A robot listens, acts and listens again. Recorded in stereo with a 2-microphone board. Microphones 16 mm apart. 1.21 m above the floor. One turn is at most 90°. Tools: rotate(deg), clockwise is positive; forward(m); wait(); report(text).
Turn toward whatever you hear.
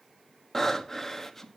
rotate(-30)
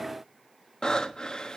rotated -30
rotate(-90)
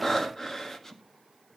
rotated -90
rotate(-25)
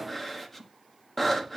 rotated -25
rotate(-10)
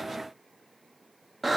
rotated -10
report("Found it: breathing, straight ahead.")